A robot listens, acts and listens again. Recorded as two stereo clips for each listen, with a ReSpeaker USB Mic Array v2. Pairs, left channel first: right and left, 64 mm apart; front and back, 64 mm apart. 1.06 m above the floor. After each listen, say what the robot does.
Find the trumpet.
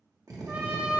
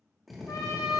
Turn 25° left.
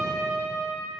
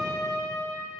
Facing the trumpet.